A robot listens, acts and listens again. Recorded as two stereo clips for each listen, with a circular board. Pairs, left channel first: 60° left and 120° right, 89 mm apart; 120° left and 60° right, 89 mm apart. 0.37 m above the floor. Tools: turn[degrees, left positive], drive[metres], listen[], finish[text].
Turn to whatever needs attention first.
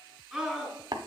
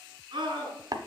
Thought: The scream: 35° right.
Action: turn[-35]
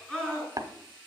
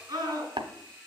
Thought: The scream is now 20° right.
Action: turn[-20]
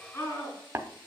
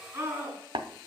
Action: finish[Facing the scream.]